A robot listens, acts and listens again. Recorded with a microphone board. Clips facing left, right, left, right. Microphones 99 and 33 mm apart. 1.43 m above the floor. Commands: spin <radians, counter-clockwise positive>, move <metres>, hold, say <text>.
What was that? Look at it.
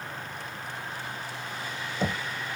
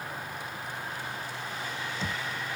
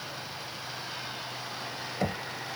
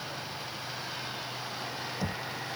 spin 0.96
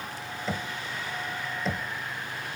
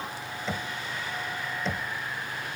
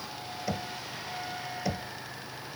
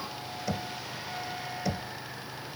say Found it: knocking, straight ahead.